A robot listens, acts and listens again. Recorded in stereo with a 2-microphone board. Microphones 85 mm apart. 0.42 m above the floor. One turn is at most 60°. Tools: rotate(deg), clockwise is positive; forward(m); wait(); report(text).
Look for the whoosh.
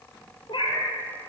wait()
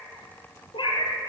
wait()
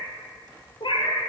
report("I can't make out a whoosh to turn to.")